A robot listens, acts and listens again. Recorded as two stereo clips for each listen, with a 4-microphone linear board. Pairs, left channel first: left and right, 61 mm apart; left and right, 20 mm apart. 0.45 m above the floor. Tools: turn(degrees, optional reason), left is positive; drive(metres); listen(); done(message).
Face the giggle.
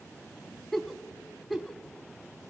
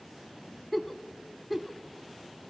turn(degrees=30)
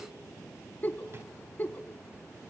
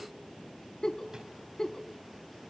turn(degrees=145, reason="So it is at 145° left.")
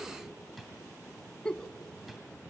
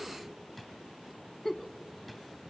turn(degrees=15, reason="The giggle is now 15° left.")
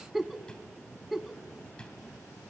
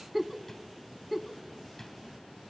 done("Facing the giggle.")